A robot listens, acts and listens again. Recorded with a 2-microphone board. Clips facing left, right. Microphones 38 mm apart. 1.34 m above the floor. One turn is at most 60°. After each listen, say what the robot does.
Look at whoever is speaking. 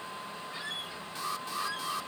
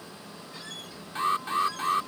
Keep listening.
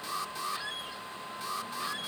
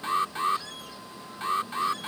Keep listening.
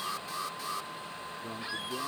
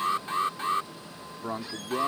Turn 60° right.
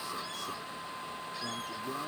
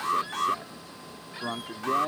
Turn 60° right.
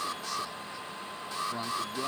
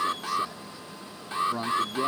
Facing the man speaking.